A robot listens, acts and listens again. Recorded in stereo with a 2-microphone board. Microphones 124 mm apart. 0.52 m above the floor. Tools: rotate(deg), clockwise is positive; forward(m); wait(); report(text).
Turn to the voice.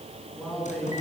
rotate(-30)
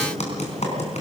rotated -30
wait()
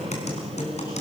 wait()
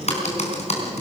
report("I heard a man speaking, but can't make it out now. It was about 25° right or 145° left.")